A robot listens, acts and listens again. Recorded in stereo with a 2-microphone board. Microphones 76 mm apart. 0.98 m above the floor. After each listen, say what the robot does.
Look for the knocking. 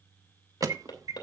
Turn 75° left.
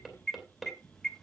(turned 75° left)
Found it: knocking, straight ahead.